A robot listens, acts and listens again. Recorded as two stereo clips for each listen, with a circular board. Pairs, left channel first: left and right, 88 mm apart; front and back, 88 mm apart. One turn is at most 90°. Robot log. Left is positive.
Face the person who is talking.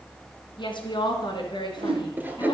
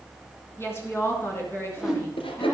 note: The woman speaking: 65° left.
cmd yaw +65
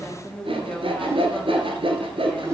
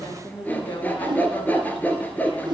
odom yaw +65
note: The woman speaking is now 10° left.
cmd yaw +10
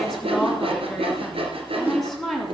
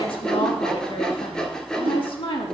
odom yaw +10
end: Found it: a woman speaking, straight ahead, 2 to 4 m away.